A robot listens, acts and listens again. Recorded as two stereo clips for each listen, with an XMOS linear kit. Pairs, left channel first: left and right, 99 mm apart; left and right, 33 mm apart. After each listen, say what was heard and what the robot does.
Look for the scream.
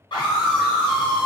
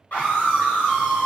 The scream: about 50° left or 130° left. Turn 50° left.
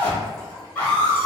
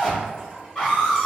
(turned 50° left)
So it is at 15° left. Turn 15° left.
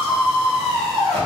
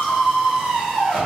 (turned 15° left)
Facing the scream.